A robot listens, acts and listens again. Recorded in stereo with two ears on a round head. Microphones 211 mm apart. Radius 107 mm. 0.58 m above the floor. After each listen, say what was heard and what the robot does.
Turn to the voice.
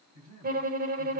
Turn 90° right.
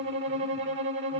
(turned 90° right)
Keep listening.
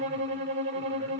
Keep listening.
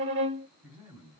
Found it: a man speaking, straight ahead, over 4 m away.